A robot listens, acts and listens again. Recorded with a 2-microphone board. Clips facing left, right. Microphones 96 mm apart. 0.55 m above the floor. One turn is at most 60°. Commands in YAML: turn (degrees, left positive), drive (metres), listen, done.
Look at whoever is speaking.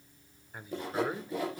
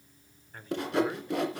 turn: 30
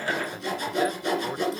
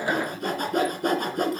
listen: true
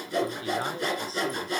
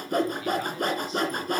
listen: true
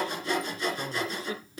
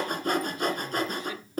turn: 60
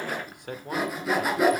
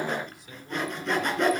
turn: 60
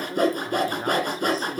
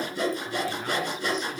turn: 40
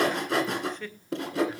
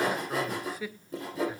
turn: -10
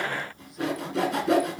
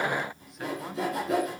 listen: true
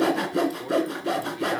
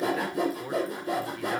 done: "Facing the man speaking, 1 to 2 m away."